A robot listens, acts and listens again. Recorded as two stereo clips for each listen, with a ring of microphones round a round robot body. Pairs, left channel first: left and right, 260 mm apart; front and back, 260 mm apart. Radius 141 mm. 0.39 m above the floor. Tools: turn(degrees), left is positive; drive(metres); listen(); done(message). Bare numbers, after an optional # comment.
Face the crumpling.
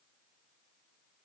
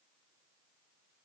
listen()
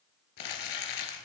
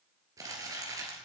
# The crumpling: 100° left.
turn(100)
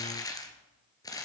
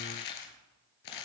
# The crumpling is now 15° left.
turn(15)
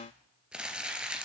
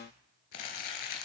done("Facing the crumpling.")